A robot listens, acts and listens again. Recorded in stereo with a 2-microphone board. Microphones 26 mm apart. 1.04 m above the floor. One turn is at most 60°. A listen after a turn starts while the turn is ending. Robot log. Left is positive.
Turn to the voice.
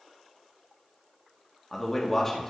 cmd yaw +30
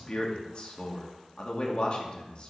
note: So it is at 135° left.
cmd yaw +60
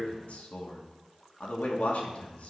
note: The man speaking is now 90° left.
cmd yaw +60
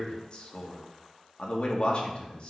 note: The man speaking is now 45° left.
cmd yaw +45
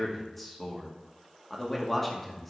note: The man speaking is now 10° left.
cmd yaw +10
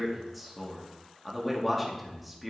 end: Found it: a man speaking, straight ahead, 2 to 4 m away.